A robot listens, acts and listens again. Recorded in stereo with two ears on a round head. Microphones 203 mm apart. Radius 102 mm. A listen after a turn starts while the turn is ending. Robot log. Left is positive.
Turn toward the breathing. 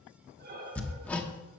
note: The breathing: about 45° right or 135° right.
cmd yaw -45
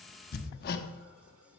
cmd idle
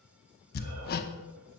cmd idle
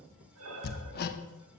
note: So it is at 85° right.
cmd yaw -85
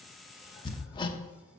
cmd idle
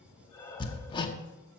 note: The breathing is now 15° left.
cmd yaw +15
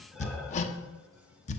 cmd idle
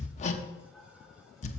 end: Found it: breathing, straight ahead.